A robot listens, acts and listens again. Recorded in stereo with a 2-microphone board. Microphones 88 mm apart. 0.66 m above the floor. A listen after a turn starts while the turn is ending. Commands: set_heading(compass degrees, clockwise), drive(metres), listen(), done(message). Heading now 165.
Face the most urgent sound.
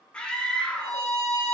set_heading(135)
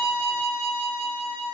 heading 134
listen()
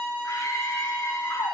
set_heading(354)
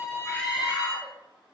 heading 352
done("Facing the scream, under 1 m away.")